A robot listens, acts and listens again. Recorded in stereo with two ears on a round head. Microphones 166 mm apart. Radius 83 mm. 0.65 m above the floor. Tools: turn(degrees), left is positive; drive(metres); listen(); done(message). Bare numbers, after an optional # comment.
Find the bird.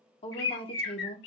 # The bird: about 65° left or 115° left.
turn(65)
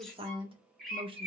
done("Found it: a bird, straight ahead.")